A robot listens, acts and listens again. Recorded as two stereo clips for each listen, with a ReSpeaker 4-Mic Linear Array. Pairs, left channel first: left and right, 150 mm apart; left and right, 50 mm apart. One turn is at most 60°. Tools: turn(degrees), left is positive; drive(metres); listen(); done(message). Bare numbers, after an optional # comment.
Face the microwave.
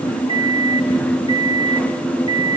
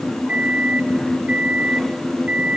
# The microwave: about 40° right or 140° right.
turn(-40)
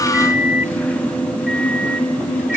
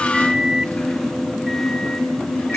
done("Found it: a microwave, straight ahead.")